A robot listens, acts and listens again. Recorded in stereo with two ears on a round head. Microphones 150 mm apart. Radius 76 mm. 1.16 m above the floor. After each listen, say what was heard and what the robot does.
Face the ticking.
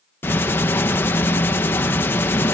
Turn 30° left.
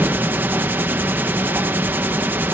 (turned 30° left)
So it is at 10° right. Turn 10° right.
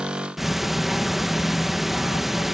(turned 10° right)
Found it: ticking, straight ahead.